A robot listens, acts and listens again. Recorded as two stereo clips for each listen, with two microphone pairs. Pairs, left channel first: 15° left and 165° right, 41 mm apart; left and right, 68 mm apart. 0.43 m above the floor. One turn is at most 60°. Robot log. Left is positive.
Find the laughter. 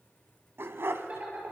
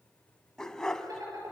note: The laughter: 115° right.
cmd yaw -60
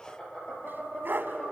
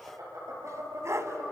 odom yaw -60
note: The laughter is now 55° right.
cmd yaw -55
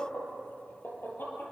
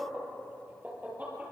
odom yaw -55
note: The laughter is now 25° right.
cmd yaw -25
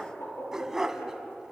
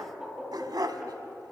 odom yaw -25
note: The laughter is now 10° right.
cmd yaw -10
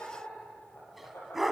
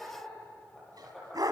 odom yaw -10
end: Facing the laughter.